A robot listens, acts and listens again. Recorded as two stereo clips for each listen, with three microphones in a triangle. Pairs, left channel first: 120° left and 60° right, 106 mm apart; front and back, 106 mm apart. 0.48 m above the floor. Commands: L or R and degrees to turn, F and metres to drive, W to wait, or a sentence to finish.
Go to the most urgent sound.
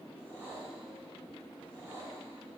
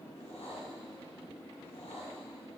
W
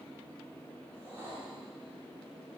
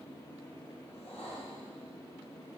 W
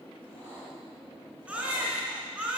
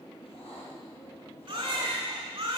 R140
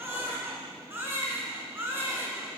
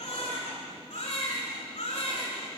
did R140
L10
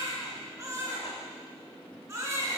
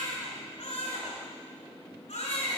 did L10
F1.0
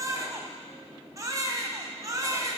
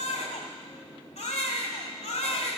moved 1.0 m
F1.0
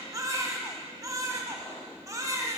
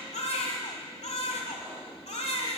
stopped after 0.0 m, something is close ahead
I am next to the baby crying.